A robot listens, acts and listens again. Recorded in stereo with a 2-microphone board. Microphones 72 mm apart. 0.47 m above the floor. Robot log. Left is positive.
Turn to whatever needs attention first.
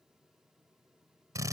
cmd idle
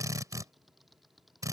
cmd idle
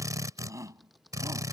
note: The shout: about 45° right or 135° right.
cmd yaw -45
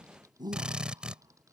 note: So it is at 90° right.
cmd yaw -90
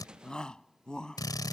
note: The shout is now 10° left.
cmd yaw +10
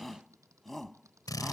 end: Facing the shout.